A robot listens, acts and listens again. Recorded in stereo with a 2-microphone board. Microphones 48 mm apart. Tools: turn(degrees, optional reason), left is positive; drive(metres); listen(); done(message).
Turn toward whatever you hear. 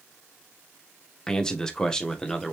turn(degrees=15, reason="The man speaking: about 15° left or 165° left.")
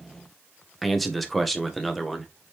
done("Found it: a man speaking, straight ahead.")